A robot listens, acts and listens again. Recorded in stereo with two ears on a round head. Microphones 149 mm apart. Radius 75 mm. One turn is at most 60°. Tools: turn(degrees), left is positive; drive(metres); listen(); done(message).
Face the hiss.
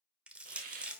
turn(degrees=-50)
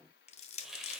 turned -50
done("Found it: a hiss, straight ahead.")